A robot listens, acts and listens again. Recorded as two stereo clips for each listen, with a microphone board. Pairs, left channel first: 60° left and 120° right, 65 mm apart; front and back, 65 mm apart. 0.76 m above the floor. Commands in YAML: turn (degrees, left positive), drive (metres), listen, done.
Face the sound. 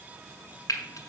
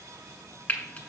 turn: 60
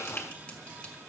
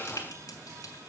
listen: true
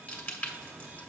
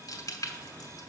turn: -10
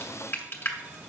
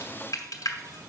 done: "Facing the frying."